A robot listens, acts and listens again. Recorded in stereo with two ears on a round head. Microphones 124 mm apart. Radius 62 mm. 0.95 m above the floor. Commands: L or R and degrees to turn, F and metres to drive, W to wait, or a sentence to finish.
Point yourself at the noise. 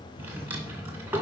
R15
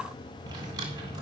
R150
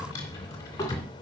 L25
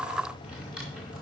Found it: a drawer, straight ahead, 2 to 4 m away.